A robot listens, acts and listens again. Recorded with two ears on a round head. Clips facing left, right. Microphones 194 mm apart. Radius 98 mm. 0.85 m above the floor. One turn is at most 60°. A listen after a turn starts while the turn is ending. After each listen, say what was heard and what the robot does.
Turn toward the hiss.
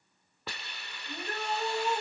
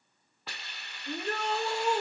The hiss: about 70° left or 110° left. Turn 60° left.
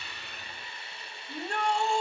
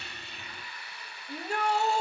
So it is at 25° left. Turn 25° left.
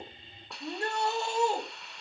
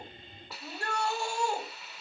Found it: a hiss, straight ahead.